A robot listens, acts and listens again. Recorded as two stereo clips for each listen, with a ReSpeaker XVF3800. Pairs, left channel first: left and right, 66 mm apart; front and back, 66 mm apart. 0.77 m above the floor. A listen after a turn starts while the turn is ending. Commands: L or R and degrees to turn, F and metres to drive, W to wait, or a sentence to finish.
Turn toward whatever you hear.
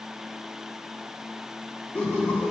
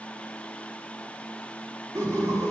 L160
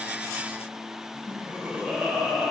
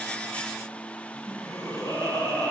R20
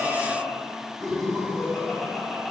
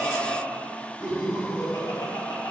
Found it: laughter, straight ahead, over 4 m away.